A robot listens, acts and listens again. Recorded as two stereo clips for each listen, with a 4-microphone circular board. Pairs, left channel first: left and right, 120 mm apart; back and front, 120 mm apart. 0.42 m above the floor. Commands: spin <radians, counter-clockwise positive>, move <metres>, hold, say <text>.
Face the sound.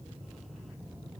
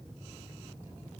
hold
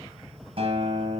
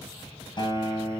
spin -2.27
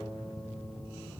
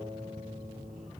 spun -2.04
spin -0.17
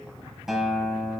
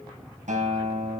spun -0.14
say Facing the guitar.